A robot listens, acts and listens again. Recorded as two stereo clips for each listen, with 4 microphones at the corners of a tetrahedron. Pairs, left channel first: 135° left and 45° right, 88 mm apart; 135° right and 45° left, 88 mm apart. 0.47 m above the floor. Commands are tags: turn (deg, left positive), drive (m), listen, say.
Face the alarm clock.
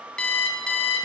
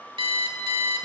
<turn deg="55"/>
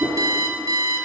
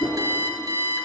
<say>Found it: an alarm clock, straight ahead, 1 to 2 m away.</say>